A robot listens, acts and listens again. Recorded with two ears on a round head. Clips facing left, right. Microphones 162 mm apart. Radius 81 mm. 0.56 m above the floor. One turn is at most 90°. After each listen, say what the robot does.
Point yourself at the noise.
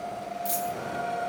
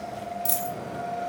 Turn 55° right.
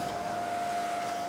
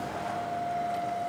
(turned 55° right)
Keep listening.
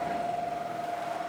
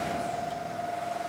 I heard a dropped coin, but can't make it out now. It was about straight ahead or 70° right.